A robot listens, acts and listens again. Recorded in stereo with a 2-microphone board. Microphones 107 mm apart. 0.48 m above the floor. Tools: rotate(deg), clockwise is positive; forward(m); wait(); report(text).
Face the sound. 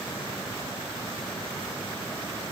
wait()
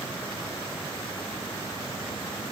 wait()
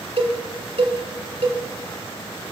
rotate(65)
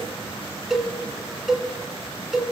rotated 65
report("Found it: a cowbell, straight ahead, 1 to 2 m away.")